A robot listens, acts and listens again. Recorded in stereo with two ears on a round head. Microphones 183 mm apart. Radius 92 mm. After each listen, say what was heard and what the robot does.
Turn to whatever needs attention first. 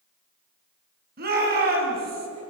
The shout: about 50° right or 130° right. Turn 50° right.
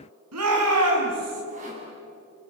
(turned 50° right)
So it is at 85° right. Turn 85° right.
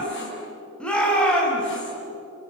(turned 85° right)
Facing the shout.